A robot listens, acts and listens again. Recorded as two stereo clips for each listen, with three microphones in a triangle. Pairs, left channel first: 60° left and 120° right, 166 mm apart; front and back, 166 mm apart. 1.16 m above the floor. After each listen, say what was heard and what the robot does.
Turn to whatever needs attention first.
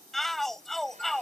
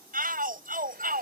The shout: 150° left. Turn 150° left.
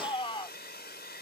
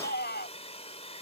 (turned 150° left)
Found it: a shout, straight ahead.